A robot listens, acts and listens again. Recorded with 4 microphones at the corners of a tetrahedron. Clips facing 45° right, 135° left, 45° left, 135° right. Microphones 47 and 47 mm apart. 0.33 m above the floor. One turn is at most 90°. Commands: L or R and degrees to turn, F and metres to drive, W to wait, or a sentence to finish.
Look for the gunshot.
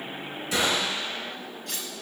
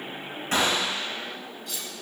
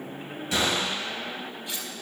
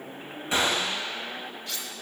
L90
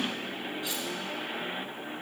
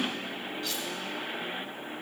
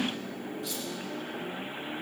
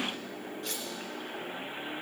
L75
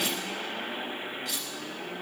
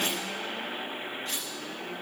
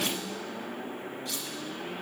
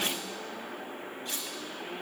Facing where the gunshot came from. I can't hear it now.